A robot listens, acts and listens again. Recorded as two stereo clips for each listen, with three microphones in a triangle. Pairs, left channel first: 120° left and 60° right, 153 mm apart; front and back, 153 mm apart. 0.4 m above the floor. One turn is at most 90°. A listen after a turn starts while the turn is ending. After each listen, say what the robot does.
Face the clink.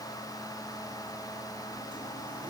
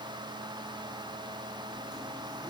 Keep listening.
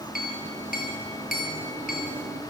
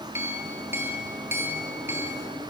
Turn 90° left.
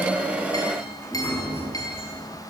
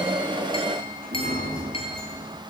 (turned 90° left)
Turn 55° left.
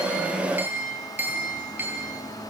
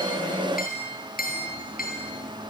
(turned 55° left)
Turn 15° left.
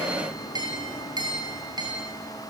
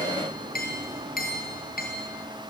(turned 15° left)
Found it: a clink, straight ahead.